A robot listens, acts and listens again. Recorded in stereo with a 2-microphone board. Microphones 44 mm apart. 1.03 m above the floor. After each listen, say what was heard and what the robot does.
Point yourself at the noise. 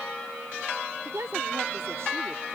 Turn 90° right.
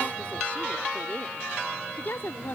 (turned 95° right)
So it is at 50° left. Turn 50° left.
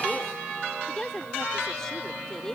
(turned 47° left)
The woman speaking is now 10° left. Turn 10° left.
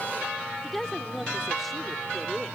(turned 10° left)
Facing the woman speaking.